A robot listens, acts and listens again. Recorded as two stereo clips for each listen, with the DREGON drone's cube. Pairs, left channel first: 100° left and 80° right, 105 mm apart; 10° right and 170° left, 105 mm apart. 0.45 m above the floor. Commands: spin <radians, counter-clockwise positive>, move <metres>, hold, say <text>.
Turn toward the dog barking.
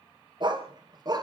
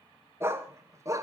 spin -2.27
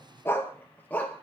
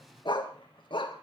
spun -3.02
spin 0.44
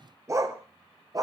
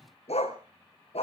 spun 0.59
spin -0.44
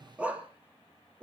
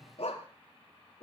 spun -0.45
say Found it: a dog barking, straight ahead, 2 to 4 m away.